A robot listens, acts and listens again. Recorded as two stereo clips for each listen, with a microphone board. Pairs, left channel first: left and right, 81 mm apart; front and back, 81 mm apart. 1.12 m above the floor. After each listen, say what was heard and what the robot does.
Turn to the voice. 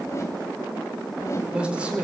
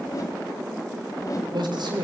The man speaking: 165° right. Turn 165° right.
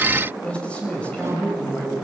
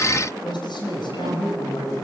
The man speaking is now 15° left. Turn 15° left.
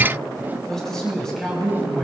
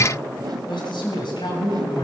Found it: a man speaking, straight ahead.